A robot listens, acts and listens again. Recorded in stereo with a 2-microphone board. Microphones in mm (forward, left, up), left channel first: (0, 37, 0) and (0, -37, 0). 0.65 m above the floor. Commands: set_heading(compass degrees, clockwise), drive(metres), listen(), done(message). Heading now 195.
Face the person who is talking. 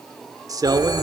set_heading(250)
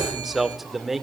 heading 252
done("Found it: a man speaking, straight ahead.")